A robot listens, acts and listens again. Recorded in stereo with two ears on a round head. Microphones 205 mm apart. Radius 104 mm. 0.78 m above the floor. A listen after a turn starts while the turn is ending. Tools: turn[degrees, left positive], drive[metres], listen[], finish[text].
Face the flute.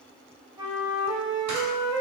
Thought: The flute: about 20° right or 160° right.
Action: turn[-20]
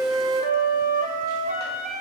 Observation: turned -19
Thought: So it is at 145° right.
Action: turn[-145]
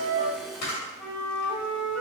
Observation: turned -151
Thought: The flute is now 10° left.
Action: turn[10]
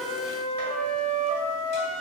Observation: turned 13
Action: finish[Facing the flute, under 1 m away.]